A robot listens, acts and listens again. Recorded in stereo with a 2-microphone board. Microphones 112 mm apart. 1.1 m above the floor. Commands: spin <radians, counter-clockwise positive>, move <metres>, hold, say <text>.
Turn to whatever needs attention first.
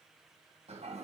hold
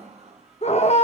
spin 1.57
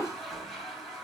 hold
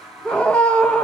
spin 0.17
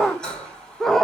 say Facing the scream, under 1 m away.